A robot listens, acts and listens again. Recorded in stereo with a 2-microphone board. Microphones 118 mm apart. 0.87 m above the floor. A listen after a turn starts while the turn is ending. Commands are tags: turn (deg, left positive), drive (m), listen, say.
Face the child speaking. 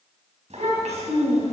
<turn deg="-70"/>
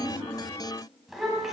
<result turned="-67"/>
<say>Facing the child speaking.</say>